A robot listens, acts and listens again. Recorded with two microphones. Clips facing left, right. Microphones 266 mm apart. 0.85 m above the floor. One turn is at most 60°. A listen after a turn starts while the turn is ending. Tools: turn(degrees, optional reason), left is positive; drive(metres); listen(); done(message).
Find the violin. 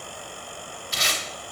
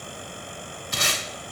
listen()
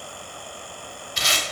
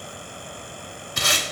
listen()
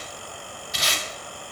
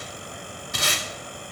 done("I can't make out a violin, only tape being pulled.")